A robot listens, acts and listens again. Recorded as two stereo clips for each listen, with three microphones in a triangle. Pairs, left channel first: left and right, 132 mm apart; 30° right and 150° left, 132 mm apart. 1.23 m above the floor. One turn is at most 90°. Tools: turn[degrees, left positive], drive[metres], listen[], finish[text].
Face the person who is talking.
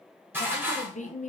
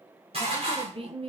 Thought: The woman speaking: 105° left.
Action: turn[90]
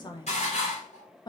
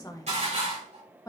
Thought: The woman speaking is now 35° left.
Action: turn[35]
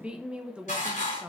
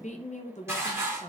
Thought: The woman speaking is now 10° right.
Action: turn[-10]
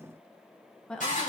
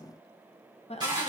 Action: finish[Found it: a woman speaking, straight ahead.]